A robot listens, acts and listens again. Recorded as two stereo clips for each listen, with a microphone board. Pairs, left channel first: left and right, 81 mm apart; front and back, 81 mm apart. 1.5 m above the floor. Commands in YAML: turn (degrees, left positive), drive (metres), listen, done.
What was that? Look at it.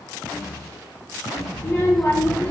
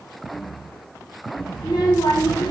turn: 25
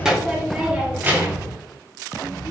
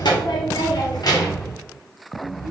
turn: -50
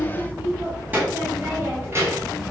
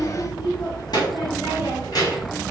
turn: -30
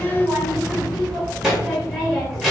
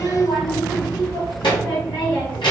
done: "Found it: a child speaking, straight ahead, 1 to 2 m away."